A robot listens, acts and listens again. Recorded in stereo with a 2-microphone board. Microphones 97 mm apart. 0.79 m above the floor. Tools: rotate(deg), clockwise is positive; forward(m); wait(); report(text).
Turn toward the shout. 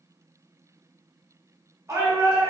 rotate(30)
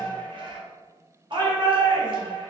rotate(115)
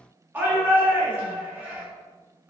rotate(20)
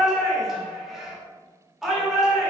report("Facing the shout, 1 to 2 m away.")